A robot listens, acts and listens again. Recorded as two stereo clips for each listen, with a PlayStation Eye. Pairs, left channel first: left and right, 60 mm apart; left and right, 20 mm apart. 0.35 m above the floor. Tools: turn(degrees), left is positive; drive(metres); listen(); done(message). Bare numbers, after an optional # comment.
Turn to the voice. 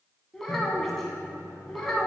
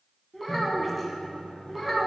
turn(30)
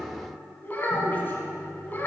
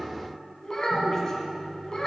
# So it is at 150° left.
turn(150)
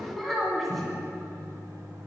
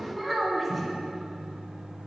done("Found it: a child speaking, straight ahead, 1 to 2 m away.")